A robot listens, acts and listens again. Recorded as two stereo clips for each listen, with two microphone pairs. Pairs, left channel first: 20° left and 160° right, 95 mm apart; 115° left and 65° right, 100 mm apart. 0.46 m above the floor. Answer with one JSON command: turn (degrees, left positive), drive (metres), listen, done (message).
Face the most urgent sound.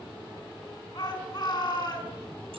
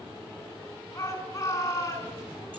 {"turn": 55}
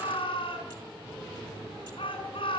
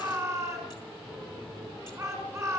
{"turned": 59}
{"done": "Facing the shout, over 4 m away."}